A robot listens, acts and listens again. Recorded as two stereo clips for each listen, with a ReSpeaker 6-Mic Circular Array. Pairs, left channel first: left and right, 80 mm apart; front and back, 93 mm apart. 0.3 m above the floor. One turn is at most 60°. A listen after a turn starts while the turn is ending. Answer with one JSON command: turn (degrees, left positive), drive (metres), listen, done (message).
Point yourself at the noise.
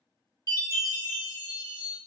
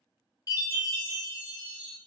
{"turn": 45}
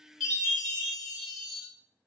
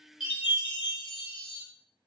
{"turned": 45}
{"done": "Found it: a chime, straight ahead."}